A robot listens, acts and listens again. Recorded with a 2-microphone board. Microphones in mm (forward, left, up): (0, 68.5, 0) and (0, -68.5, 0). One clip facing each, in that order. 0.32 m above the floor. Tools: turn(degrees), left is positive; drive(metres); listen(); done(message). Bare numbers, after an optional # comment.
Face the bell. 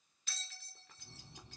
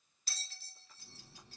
# The bell: about 40° right or 140° right.
turn(-40)
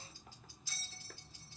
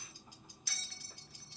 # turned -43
# So it is at 100° right.
turn(-100)
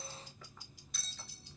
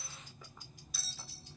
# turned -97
done("Found it: a bell, straight ahead.")